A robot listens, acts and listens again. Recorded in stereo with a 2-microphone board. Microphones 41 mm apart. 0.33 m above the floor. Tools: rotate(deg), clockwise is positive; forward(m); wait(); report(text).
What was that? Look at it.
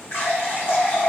rotate(-65)
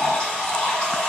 rotate(-30)
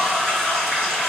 report("Found it: a running tap, straight ahead.")